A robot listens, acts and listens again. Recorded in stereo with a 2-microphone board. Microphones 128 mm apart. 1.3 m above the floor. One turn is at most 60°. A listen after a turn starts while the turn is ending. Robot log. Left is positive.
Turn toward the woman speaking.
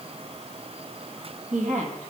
note: The woman speaking: about 75° right or 105° right.
cmd yaw -60
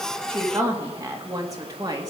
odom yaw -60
note: So it is at 30° right.
cmd yaw -30
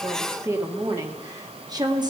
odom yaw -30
note: The woman speaking is now 35° right.
cmd yaw -35
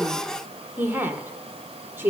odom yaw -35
note: The woman speaking is now 15° right.
cmd yaw -15
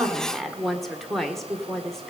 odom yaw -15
end: Facing the woman speaking.